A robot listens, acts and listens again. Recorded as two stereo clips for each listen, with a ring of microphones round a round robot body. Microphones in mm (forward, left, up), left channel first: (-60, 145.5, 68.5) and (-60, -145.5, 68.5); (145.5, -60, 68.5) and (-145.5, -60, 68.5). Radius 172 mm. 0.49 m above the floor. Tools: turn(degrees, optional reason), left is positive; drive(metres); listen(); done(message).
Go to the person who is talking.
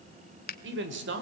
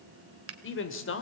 turn(degrees=-40, reason="The man speaking: 40° right.")
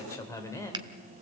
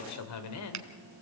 turn(degrees=10, reason="The man speaking is now 10° left.")
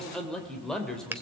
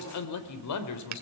drive(metres=1.0)
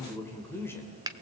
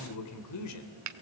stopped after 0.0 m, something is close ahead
turn(degrees=10, reason="The man speaking is now 10° left.")
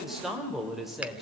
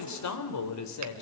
done("Something is in my way. I am facing the man speaking but have not reached it.")